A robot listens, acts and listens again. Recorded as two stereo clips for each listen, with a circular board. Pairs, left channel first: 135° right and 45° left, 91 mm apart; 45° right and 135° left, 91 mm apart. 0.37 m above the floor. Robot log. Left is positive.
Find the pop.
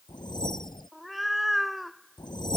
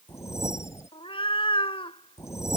cmd idle
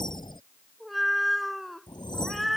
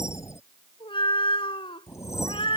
cmd idle
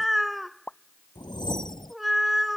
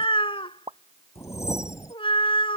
note: The pop: 150° left.
cmd yaw +150
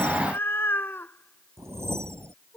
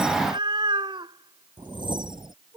end: Facing where the pop came from. I can't hear it now.